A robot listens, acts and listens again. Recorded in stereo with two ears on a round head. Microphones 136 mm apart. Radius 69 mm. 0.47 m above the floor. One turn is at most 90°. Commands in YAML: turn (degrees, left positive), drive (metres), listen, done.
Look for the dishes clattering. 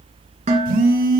turn: -50
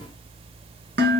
turn: -80
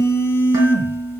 turn: -20
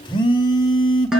done: "Facing the dishes clattering."